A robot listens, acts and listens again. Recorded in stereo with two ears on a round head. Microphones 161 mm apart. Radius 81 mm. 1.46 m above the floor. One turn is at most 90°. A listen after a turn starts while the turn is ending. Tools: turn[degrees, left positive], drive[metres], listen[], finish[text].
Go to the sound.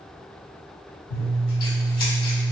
Thought: The scissors: about 55° left or 125° left.
Action: turn[55]
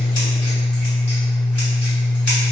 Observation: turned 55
Thought: So it is at 10° left.
Action: turn[10]
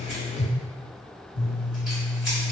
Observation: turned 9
Action: drive[1.0]
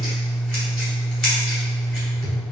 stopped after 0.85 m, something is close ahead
Action: finish[Arrived at the scissors, straight ahead.]